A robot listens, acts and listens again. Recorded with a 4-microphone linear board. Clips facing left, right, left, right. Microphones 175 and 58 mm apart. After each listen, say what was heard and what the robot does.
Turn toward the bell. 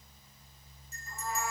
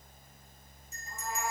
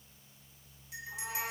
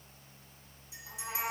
The bell: about 60° left or 120° left. Turn 60° left.
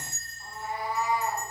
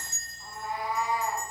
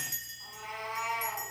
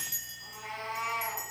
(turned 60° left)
So it is at 55° left. Turn 55° left.
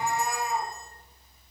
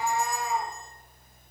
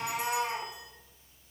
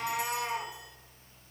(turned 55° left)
Keep listening.
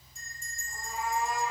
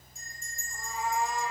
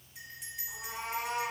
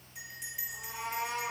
Found it: a bell, straight ahead, 1 to 2 m away.